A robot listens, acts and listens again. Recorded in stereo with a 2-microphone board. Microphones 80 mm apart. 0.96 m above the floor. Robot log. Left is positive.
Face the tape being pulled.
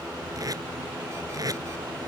note: The tape being pulled: about 45° right or 135° right.
cmd yaw -45
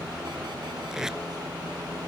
end: Found it: tape being pulled, straight ahead.